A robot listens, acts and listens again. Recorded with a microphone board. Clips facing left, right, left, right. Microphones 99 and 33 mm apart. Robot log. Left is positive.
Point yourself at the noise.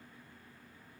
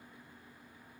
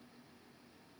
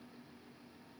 cmd idle
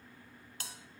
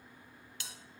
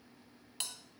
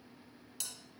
note: The bell: about 40° left or 140° left.
cmd yaw +40
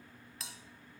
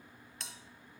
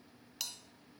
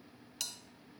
end: Found it: a bell, straight ahead, 1 to 2 m away.